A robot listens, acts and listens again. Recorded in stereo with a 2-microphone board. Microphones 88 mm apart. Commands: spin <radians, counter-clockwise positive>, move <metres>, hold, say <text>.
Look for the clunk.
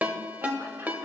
hold
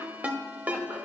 hold
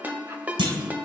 spin -1.57
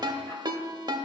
say Facing where the clunk came from. I can't hear it now.